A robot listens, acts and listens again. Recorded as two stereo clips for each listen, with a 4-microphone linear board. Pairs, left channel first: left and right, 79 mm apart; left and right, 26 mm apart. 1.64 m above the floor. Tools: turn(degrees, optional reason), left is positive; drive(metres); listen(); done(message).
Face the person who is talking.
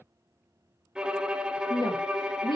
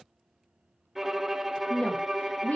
turn(degrees=70, reason="The woman speaking: about 70° left or 110° left.")
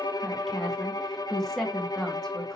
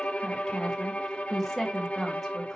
done("Found it: a woman speaking, straight ahead, 2 to 4 m away.")